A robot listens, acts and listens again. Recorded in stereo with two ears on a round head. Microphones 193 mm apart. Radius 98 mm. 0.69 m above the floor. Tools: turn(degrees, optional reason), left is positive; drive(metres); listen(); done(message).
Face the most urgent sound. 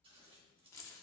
listen()
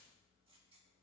listen()
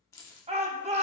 turn(degrees=-30, reason="The shout: about 30° right or 150° right.")
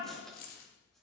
listen()
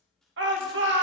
turn(degrees=-115, reason="So it is at 115° right.")
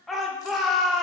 done("Facing the shout, 1 to 2 m away.")